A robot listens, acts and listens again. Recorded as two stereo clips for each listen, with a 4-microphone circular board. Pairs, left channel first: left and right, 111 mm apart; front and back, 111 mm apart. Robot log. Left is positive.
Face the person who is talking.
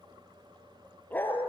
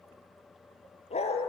cmd idle
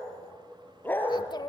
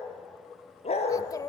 note: The child speaking: 50° left.
cmd yaw +50
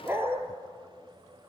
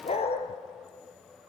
cmd idle
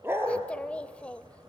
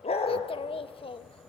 note: The child speaking is now 15° left.
cmd yaw +15
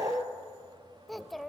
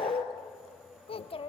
end: Found it: a child speaking, straight ahead, under 1 m away.